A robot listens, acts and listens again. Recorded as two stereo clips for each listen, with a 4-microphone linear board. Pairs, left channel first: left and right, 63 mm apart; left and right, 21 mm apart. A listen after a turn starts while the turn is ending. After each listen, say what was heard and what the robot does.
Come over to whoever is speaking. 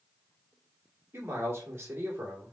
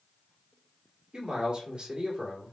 The man speaking: about 45° right or 135° right. Turn 45° right.
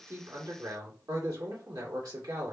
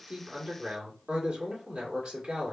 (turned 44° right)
So it is at 90° right. Turn 90° right.
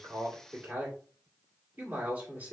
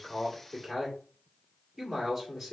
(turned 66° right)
The man speaking is now 25° right. Turn 25° right.
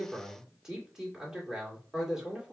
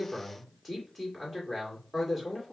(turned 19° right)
The man speaking is now 10° right. Turn 10° right.
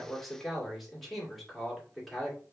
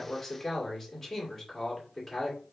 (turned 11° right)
Drive 1.0 m forward.
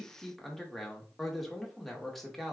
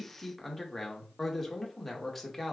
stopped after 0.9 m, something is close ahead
I am next to the man speaking.